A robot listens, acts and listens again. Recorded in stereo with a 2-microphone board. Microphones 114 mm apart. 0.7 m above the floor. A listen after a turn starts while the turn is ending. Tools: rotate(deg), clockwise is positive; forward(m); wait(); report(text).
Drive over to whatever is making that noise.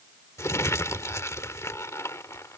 rotate(-25)
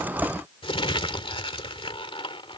rotate(-130)
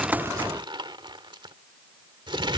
rotate(45)
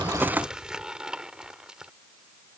forward(1.0)
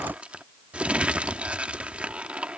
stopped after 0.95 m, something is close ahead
rotate(10)
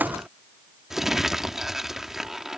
report("Arrived at the crumpling, straight ahead.")